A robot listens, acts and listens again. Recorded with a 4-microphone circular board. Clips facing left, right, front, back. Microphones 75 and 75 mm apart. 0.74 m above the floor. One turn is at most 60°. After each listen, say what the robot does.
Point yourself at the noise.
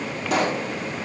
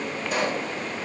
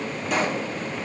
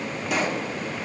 Turn 60° left.
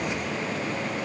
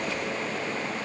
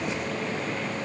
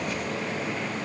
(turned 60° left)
Turn 35° left.
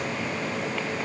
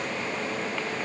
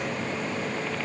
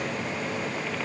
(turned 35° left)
I heard a pop from this way, but can't make it out now.